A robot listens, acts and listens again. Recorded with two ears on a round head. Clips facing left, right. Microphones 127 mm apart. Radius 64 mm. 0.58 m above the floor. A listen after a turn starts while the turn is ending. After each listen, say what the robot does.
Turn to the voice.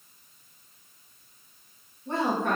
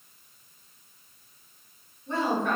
Turn 45° left.
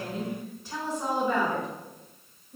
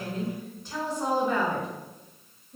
Found it: a woman speaking, straight ahead, 1 to 2 m away.